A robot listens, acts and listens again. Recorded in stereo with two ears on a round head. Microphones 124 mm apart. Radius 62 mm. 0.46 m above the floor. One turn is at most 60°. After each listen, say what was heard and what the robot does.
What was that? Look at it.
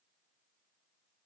Keep listening.
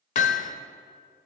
The hammering: about 55° left or 125° left. Turn 55° left.
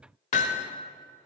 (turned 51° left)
So it is at 65° left. Turn 60° left.
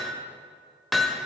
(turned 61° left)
Facing the hammering, 1 to 2 m away.